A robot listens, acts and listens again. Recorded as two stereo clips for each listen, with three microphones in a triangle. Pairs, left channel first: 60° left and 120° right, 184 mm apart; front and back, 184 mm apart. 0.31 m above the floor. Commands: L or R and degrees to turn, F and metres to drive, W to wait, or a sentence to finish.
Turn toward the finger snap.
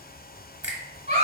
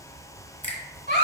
R35
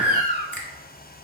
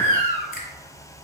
R20
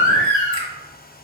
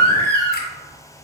W
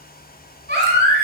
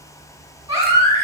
W
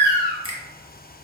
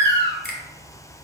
Facing the finger snap.